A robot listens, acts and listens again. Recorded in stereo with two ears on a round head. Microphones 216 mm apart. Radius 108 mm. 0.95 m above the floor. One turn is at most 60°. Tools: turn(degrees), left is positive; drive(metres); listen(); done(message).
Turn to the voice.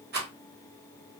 listen()
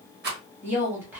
turn(degrees=-30)
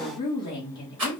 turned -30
turn(degrees=20)
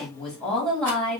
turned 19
done("Found it: a woman speaking, straight ahead.")